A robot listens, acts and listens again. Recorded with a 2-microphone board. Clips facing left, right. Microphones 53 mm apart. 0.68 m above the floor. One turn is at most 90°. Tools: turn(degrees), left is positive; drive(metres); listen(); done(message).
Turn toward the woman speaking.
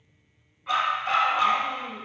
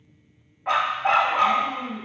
turn(degrees=35)
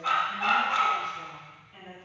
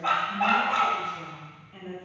turn(degrees=-10)
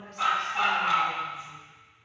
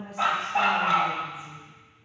turn(degrees=-10)
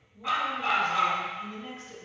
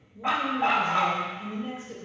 turn(degrees=-15)
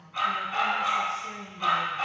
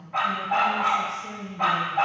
done("Facing the woman speaking.")